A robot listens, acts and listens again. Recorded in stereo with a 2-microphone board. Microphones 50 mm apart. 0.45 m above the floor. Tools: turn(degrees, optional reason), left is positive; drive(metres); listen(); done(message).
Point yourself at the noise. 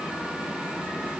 listen()
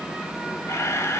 turn(degrees=70, reason="The camera shutter: about 70° left or 110° left.")
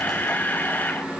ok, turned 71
turn(degrees=35, reason="So it is at 35° left.")
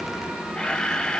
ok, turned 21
turn(degrees=15, reason="The camera shutter is now 15° left.")
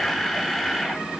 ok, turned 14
done("Facing the camera shutter.")